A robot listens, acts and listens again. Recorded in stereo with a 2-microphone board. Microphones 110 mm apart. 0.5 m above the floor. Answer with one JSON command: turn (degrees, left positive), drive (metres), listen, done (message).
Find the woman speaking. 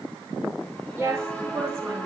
{"turn": -25}
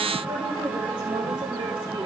{"turn": -130}
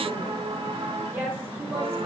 {"turn": -20}
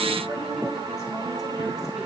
{"listen": true}
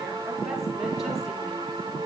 {"listen": true}
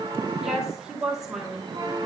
{"done": "Found it: a woman speaking, straight ahead."}